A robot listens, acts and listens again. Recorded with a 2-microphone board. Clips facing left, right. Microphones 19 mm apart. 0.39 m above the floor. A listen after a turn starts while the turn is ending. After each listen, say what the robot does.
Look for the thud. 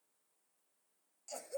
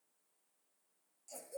Keep listening.
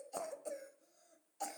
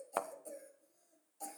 Turn 50° right.
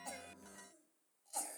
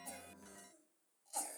Keep listening.
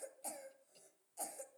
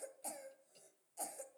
I heard a thud, but can't make it out now. It was about straight ahead or 80° right.